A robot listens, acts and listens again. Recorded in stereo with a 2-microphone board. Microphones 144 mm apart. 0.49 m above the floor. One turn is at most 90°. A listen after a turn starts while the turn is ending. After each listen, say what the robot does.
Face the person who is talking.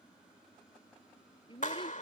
Turn 35° left.
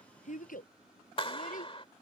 Turn 90° left.
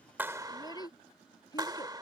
Turn 25° left.
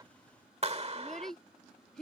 Found it: a child speaking, straight ahead.